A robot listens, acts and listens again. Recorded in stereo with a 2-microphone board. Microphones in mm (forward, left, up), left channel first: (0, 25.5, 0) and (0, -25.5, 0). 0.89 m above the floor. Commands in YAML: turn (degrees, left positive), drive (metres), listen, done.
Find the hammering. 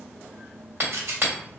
turn: -50
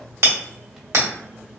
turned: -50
turn: -75
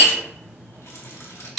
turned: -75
done: "Found it: hammering, straight ahead, 1 to 2 m away."